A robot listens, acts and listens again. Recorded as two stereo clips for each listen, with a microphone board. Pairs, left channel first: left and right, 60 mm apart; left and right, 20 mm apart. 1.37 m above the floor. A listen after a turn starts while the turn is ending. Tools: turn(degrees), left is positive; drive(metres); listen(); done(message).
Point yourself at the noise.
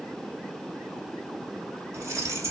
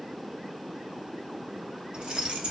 turn(degrees=-55)
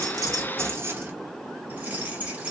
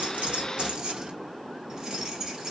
turn(degrees=-20)
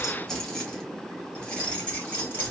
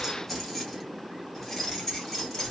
turn(degrees=20)
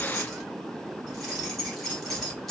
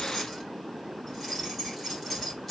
done("Facing the keys jangling.")